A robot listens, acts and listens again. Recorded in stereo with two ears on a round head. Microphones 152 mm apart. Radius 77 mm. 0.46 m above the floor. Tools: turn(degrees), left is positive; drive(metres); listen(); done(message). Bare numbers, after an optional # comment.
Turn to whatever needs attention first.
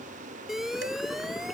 turn(30)
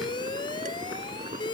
# So it is at 150° left.
turn(150)
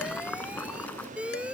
done("Found it: an alarm, straight ahead.")